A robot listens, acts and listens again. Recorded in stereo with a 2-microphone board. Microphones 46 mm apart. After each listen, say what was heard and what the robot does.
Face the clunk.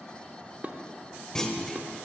Turn 30° left.
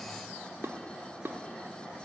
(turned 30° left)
Keep listening.
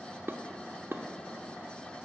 I heard a clunk, but can't make it out now. It was about 20° right or 140° left.